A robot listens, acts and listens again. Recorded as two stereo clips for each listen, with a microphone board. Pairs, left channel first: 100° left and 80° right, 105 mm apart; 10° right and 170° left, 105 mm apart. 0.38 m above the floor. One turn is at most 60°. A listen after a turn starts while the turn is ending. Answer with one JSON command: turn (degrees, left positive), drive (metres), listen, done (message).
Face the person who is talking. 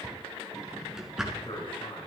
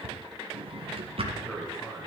{"turn": 60}
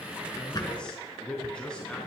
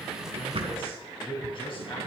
{"turn": 20}
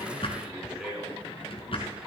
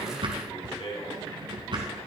{"done": "Facing the man speaking."}